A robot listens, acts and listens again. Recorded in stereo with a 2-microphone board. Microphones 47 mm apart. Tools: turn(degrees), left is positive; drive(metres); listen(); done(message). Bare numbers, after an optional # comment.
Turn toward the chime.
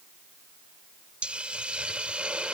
listen()
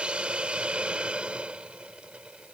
listen()
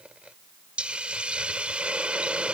done("I can't make out a chime, only a hiss.")